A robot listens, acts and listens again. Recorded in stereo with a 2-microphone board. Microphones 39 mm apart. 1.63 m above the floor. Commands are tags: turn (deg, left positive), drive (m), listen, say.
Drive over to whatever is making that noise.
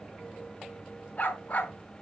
<turn deg="40"/>
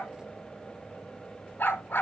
<turn deg="95"/>
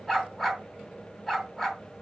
<drive m="1.0"/>
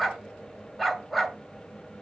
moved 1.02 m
<drive m="1.0"/>
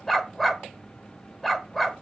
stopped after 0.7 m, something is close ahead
<say>Arrived at the dog barking, straight ahead.</say>